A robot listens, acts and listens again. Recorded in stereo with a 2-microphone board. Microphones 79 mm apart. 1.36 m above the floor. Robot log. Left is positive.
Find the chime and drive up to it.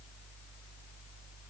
cmd idle
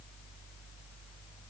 cmd idle
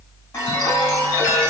note: The chime: about 30° left or 150° left.
cmd yaw +30
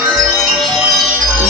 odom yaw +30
cmd fwd 1.0
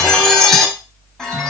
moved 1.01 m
cmd fwd 1.0
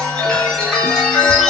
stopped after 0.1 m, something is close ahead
end: Arrived at the chime, straight ahead.